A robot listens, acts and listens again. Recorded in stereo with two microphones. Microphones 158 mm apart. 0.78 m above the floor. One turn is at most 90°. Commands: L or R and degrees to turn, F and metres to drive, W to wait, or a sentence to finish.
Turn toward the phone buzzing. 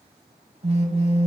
R40
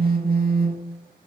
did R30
R90
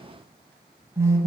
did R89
R20
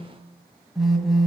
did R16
Found it: a phone buzzing, straight ahead, 1 to 2 m away.